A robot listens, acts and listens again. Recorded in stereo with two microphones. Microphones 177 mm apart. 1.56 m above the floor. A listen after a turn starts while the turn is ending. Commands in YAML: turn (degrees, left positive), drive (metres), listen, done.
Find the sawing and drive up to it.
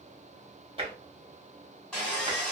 turn: 30
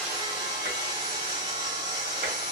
turn: -25
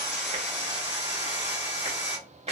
drive: 1.0
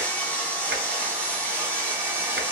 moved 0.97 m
turn: 10
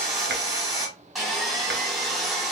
drive: 1.0
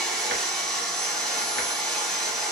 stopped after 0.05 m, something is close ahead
done: "I am next to the sawing."